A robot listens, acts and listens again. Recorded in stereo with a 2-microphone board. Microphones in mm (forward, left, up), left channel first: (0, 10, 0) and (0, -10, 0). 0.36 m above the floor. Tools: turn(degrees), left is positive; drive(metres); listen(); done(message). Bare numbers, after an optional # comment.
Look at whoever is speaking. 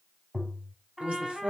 # The woman speaking: about 65° right or 115° right.
turn(-65)
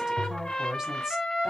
# So it is at 30° right.
turn(-30)
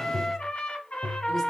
listen()
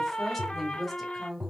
# The woman speaking is now 10° left.
turn(10)
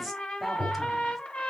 listen()
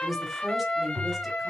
done("Found it: a woman speaking, straight ahead, 1 to 2 m away.")